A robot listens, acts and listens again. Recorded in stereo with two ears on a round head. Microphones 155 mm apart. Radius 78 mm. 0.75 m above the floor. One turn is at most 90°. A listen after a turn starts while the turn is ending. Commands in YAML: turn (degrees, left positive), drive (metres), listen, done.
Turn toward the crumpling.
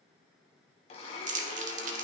turn: -45
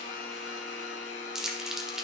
done: "Facing the crumpling, 1 to 2 m away."